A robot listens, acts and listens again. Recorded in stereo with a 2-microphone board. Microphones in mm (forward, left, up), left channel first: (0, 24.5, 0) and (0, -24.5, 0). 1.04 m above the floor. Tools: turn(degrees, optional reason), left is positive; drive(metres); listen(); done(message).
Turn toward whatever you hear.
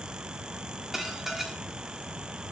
turn(degrees=-30)
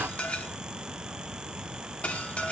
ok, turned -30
turn(degrees=25, reason="So it is at 25° left.")
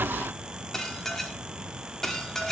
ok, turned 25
turn(degrees=10, reason="The dishes clattering is now 10° left.")
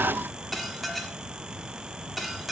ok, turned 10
done("Facing the dishes clattering.")